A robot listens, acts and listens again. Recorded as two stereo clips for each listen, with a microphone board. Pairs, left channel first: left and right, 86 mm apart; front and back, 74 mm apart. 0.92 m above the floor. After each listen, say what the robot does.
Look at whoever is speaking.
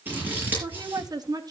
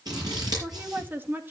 Turn 120° right.
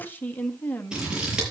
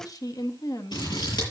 Turn 25° left.
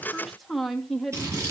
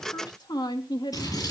Facing the woman speaking, 1 to 2 m away.